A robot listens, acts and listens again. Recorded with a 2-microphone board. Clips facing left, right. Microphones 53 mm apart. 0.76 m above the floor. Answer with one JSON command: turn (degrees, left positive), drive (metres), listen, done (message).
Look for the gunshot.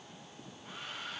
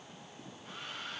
{"listen": true}
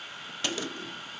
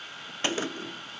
{"turn": -35}
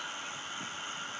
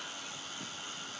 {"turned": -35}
{"listen": true}
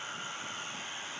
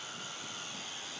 {"done": "I heard a gunshot, but can't make it out now. It was about straight ahead or 110° right."}